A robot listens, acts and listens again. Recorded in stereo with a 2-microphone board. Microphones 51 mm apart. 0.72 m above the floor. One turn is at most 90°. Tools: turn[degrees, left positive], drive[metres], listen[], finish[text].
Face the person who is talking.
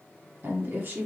Thought: The woman speaking: about 45° right or 135° right.
Action: turn[-45]
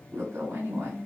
Thought: So it is at 80° right.
Action: turn[-80]
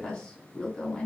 Thought: The woman speaking is now 20° left.
Action: turn[20]
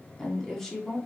Thought: The woman speaking is now 10° left.
Action: turn[10]
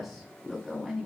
Action: finish[Found it: a woman speaking, straight ahead, 1 to 2 m away.]